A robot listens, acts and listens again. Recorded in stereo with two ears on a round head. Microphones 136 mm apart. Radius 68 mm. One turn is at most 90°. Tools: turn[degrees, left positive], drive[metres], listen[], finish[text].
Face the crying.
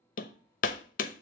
Action: listen[]
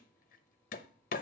Action: listen[]
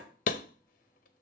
Action: finish[I can't make out crying, only hammering.]